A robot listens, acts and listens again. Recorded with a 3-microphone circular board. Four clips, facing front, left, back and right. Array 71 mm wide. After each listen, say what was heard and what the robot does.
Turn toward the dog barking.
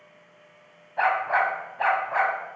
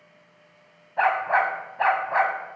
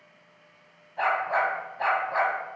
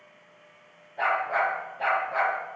The dog barking: 85° left. Turn 85° left.
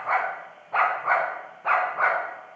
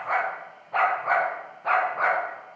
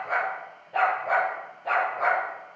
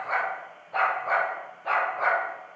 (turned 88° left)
The dog barking is now 20° left. Turn 20° left.
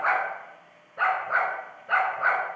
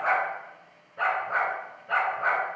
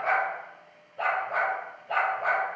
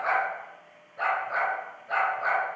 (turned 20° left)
The dog barking is now 10° left. Turn 10° left.
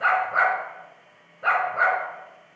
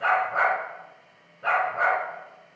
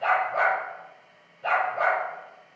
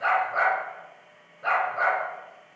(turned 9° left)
Facing the dog barking, 2 to 4 m away.